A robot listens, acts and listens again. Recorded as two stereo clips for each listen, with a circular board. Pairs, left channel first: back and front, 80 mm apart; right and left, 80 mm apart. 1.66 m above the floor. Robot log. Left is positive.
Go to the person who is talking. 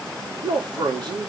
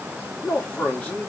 note: The man speaking: 20° right.
cmd yaw -20
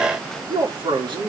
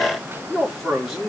cmd fwd 1.0
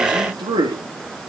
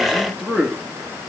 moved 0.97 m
cmd fwd 1.0
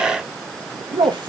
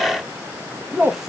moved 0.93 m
cmd fwd 1.0
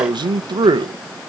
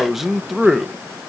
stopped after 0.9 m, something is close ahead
end: I am next to the man speaking.